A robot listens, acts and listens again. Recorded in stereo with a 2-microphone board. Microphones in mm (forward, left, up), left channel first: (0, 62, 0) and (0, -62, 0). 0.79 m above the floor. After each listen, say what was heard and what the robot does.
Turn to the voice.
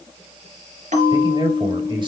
The man speaking: about 40° right or 140° right. Turn 40° right.
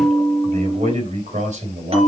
So it is at 100° right. Turn 100° right.
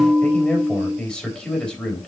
The man speaking is now 10° left. Turn 10° left.
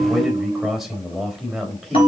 Facing the man speaking, 2 to 4 m away.